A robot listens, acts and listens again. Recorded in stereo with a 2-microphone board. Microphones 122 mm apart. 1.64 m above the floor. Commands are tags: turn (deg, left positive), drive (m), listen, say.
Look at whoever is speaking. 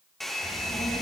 <turn deg="70"/>
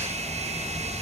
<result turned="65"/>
<turn deg="35"/>
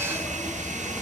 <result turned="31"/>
<say>Found it: a child speaking, straight ahead.</say>